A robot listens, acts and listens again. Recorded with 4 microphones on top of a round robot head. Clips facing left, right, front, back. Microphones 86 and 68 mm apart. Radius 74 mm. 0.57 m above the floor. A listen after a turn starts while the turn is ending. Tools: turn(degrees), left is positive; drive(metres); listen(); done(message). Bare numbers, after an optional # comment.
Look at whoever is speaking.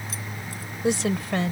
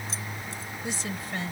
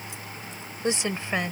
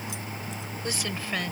# The woman speaking: 65° left.
turn(65)
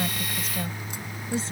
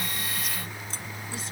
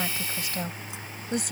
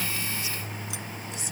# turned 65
# The woman speaking is now 25° left.
turn(25)
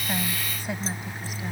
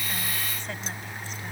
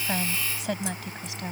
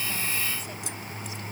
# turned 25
done("Facing the woman speaking.")